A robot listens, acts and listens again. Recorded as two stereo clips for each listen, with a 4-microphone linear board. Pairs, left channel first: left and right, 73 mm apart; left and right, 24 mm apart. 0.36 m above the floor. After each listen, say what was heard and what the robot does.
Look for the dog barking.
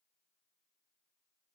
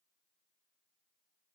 Keep listening.
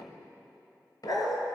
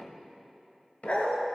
The dog barking: about 60° left or 120° left. Turn 60° left.
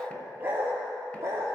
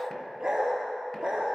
So it is at 40° right. Turn 40° right.
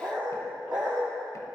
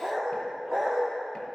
The dog barking is now 15° right. Turn 15° right.
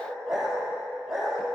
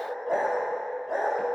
Found it: a dog barking, straight ahead.